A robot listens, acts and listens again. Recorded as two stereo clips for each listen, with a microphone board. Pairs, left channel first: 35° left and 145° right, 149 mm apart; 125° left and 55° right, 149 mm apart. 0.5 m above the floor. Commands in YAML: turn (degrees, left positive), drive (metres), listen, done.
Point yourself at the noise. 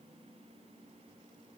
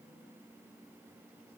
listen: true
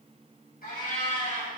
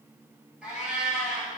turn: 25
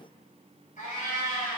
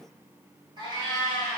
done: "Facing the cat meowing, 1 to 2 m away."